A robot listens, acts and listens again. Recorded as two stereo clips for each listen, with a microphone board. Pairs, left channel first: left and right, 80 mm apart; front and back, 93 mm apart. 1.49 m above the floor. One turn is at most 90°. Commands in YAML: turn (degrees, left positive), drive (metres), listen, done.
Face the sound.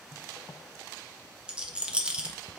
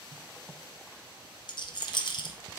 turn: -15
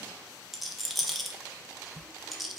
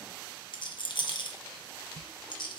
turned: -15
done: "Facing the rattle, under 1 m away."